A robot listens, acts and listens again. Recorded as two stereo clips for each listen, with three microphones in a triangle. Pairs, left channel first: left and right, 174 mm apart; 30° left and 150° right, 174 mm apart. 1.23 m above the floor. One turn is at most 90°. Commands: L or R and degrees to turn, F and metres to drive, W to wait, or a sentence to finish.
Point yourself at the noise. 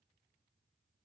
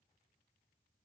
W
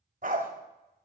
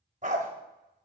R90
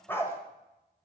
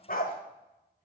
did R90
L15
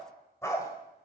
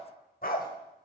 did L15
L20
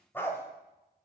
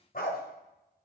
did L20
L15
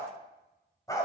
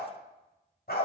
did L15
L25
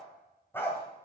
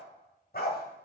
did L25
L15
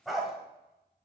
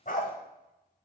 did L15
Facing the dog barking, 1 to 2 m away.